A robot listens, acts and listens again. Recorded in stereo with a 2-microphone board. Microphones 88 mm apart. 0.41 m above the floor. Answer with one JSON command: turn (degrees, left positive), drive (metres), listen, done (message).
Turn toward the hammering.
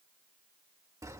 {"listen": true}
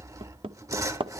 {"turn": -90}
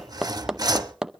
{"done": "Facing the hammering, under 1 m away."}